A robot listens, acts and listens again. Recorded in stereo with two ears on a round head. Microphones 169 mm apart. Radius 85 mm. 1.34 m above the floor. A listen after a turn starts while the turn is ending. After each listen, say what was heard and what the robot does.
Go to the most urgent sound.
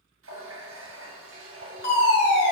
The fire alarm: about 60° left or 120° left. Turn 60° left.
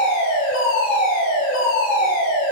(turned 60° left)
So it is at 50° left. Turn 50° left.
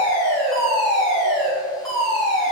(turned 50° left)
Drive 1.0 m forward.
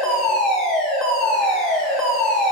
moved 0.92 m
Drive 1.0 m forward.
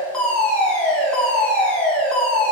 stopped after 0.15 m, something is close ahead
Arrived at the fire alarm, straight ahead.